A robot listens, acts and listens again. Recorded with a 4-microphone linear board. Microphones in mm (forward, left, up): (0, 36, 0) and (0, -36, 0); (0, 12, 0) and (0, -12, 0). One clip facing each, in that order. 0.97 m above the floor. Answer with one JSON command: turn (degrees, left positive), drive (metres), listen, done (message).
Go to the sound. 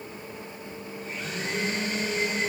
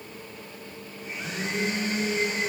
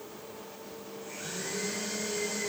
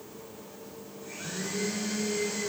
{"turn": -15}
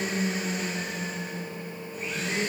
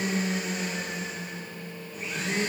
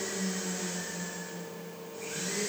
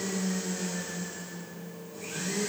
{"drive": 1.0}
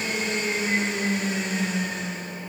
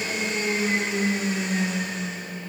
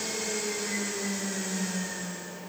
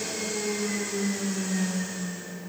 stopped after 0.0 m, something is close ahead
{"done": "Something is in my way. I am facing the blender but have not reached it."}